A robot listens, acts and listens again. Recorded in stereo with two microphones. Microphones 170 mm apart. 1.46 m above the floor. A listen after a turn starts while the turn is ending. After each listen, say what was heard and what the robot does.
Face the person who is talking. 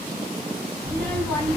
Turn 30° left.
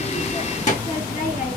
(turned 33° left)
So it is at 135° left. Turn 135° left.
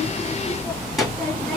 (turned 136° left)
Found it: a child speaking, straight ahead, 1 to 2 m away.